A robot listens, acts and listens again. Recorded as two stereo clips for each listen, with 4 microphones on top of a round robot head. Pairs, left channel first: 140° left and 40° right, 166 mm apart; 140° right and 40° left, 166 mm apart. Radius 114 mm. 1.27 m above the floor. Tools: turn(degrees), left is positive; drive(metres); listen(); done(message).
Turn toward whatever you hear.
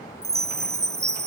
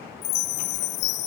turn(degrees=-115)
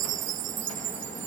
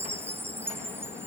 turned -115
turn(degrees=-35)
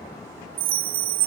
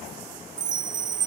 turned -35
done("Found it: a chime, straight ahead.")